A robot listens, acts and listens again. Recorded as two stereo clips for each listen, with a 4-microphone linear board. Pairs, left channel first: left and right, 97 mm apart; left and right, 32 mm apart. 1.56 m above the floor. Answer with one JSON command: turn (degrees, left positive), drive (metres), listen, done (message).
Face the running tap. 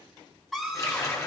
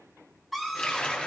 {"turn": 30}
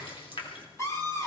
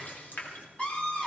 {"turn": 120}
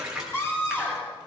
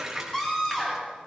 {"done": "Facing the running tap, 2 to 4 m away."}